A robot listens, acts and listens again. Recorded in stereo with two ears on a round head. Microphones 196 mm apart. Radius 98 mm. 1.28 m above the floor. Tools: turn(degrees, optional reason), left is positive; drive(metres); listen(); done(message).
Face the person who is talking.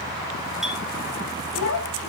turn(degrees=75, reason="The child speaking: about 75° left or 105° left.")
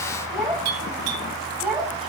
done("Facing the child speaking.")